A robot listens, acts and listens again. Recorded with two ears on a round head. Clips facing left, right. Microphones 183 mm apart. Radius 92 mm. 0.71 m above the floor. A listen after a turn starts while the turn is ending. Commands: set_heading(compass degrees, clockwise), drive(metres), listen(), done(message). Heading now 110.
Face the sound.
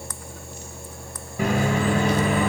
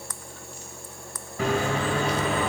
set_heading(80)
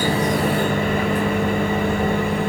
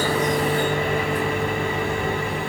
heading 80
set_heading(305)
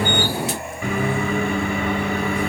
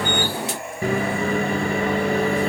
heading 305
set_heading(335)
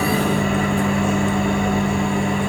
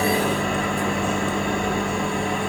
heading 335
done("Found it: a microwave, straight ahead, 2 to 4 m away.")